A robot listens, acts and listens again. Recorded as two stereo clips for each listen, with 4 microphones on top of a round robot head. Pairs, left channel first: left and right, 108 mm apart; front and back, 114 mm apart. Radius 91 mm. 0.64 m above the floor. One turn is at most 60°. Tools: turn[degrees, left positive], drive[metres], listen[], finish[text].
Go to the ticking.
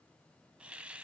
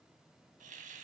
Action: listen[]
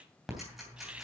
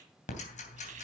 Action: drive[1.0]
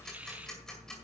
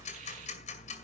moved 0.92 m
Action: drive[1.0]
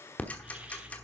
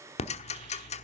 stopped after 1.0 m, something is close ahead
Thought: The ticking is now 10° left.
Action: turn[10]
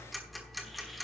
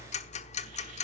Action: finish[Arrived at the ticking, straight ahead.]